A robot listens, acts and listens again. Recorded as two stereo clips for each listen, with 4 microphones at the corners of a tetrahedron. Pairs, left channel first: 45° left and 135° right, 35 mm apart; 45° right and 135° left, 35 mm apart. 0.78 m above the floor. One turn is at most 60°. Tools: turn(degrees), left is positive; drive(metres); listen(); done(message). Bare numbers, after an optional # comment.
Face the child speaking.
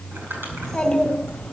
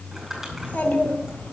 # The child speaking: 35° right.
turn(-35)
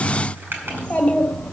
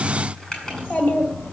# The child speaking is now 20° right.
turn(-20)
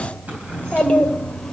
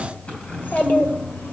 # The child speaking is now 30° right.
turn(-30)
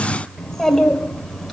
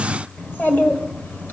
# The child speaking is now 45° right.
turn(-45)
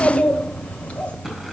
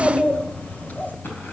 # The child speaking is now 10° right.
turn(-10)
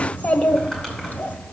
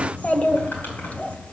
done("Found it: a child speaking, straight ahead.")